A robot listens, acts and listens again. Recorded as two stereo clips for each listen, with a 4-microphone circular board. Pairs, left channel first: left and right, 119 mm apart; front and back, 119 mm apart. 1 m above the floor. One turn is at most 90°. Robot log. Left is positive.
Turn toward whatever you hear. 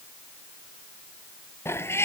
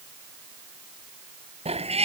note: The cat meowing: 160° left.
cmd yaw +90
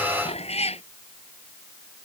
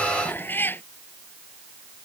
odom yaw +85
note: The cat meowing is now 70° left.
cmd yaw +70
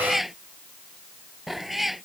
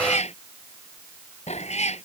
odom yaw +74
end: Facing the cat meowing.